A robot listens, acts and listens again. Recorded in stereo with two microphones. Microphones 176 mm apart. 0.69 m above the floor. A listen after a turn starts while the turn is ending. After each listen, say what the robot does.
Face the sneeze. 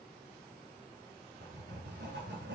Keep listening.
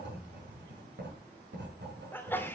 Turn 30° left.
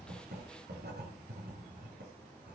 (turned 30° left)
Keep listening.
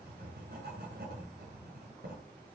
I heard a sneeze, but can't make it out now. It was about 20° right or 140° left.